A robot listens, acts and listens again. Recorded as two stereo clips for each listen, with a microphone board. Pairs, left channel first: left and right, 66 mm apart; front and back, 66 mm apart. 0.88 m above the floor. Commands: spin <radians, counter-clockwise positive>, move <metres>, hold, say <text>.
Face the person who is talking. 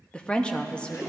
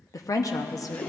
spin 0.26
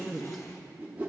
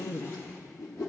say Found it: a woman speaking, straight ahead.